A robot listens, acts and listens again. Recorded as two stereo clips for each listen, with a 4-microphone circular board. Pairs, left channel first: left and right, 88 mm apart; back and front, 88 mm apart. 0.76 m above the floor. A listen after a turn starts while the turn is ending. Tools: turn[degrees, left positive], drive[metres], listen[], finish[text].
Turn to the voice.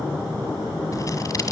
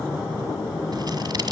Action: listen[]
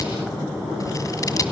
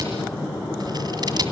Action: listen[]
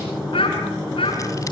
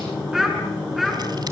Thought: The child speaking: 90° left.
Action: turn[90]
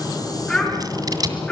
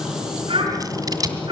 Thought: The child speaking is now 10° left.
Action: turn[10]
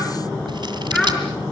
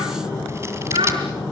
Action: finish[Found it: a child speaking, straight ahead, over 4 m away.]